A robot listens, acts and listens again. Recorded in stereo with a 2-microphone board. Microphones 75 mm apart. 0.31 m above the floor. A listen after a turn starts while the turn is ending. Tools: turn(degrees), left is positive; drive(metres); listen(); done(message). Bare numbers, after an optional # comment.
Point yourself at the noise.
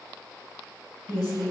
# The woman speaking: about 70° left or 110° left.
turn(70)
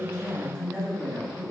# So it is at 30° left.
turn(30)
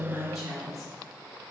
done("Found it: a woman speaking, straight ahead, 2 to 4 m away.")